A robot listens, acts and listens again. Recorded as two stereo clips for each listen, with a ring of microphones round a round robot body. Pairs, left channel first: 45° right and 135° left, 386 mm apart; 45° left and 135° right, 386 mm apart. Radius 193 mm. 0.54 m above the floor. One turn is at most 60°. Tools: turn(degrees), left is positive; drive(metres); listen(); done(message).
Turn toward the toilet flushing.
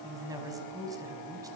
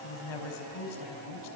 listen()
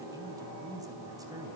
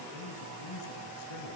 listen()
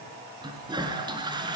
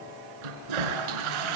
turn(degrees=-60)
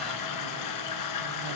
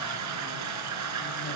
turn(degrees=-60)
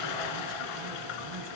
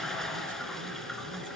turn(degrees=-45)
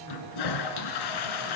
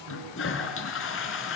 turn(degrees=-15)
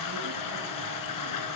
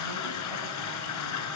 done("Found it: a toilet flushing, straight ahead.")